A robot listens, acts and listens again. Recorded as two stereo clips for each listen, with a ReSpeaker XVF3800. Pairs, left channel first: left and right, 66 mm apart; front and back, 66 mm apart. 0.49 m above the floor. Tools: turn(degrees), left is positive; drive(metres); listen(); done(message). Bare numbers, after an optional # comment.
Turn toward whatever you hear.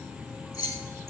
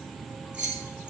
# The keys jangling: 110° left.
turn(110)
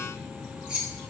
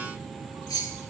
# The keys jangling is now 15° right.
turn(-15)
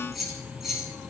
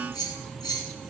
done("Facing the keys jangling.")